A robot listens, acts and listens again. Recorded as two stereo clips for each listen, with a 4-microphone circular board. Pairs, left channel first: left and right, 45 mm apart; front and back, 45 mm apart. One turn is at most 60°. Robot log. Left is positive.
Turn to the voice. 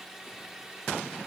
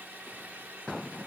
cmd idle
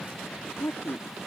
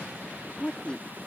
note: The woman speaking: 65° left.
cmd yaw +60
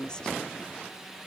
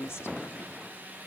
note: The woman speaking is now 20° left.
cmd yaw +20
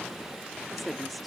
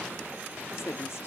end: Facing the woman speaking.